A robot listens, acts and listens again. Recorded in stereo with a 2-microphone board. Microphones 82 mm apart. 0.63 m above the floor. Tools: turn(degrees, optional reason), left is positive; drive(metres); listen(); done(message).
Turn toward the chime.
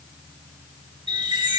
turn(degrees=-70, reason="The chime: about 70° right or 110° right.")
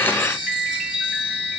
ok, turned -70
turn(degrees=-15, reason="So it is at 15° right.")
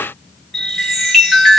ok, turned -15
done("Found it: a chime, straight ahead.")